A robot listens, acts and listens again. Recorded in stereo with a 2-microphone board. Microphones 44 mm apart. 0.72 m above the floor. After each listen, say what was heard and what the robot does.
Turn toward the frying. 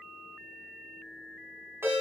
Keep listening.
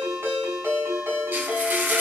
The frying: about 55° right or 125° right. Turn 55° right.
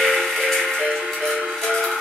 Facing the frying, 1 to 2 m away.